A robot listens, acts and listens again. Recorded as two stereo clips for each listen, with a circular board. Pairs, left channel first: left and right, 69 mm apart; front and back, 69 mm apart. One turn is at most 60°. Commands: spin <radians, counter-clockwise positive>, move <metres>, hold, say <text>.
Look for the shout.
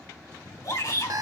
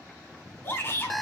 spin 1.05
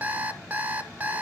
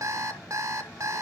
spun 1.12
hold
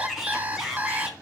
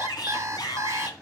say Found it: a shout, straight ahead, 2 to 4 m away.